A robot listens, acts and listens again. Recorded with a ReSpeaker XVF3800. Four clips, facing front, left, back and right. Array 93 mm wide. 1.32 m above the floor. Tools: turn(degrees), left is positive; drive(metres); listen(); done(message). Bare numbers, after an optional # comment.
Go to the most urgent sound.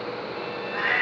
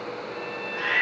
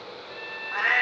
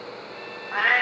listen()
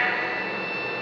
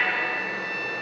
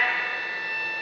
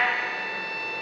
listen()
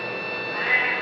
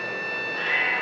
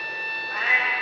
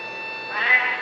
done("I can't make out anything urgent to turn to.")